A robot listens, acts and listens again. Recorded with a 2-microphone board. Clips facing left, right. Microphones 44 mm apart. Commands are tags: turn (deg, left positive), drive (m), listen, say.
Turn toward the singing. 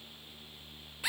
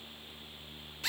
<listen/>
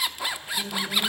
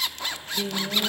<turn deg="-40"/>
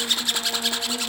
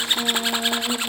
<turn deg="-105"/>
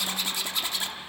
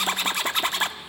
<listen/>
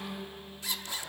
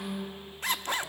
<turn deg="-15"/>
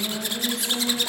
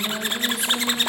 <say>Facing the singing, over 4 m away.</say>